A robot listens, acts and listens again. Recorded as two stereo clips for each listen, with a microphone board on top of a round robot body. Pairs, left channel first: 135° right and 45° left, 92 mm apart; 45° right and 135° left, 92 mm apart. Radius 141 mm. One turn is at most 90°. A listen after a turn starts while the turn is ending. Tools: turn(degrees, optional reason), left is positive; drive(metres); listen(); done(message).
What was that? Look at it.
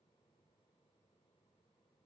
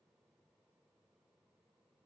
listen()
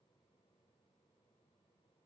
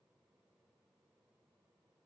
listen()
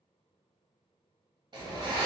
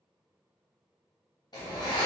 done("Facing the zipper, under 1 m away.")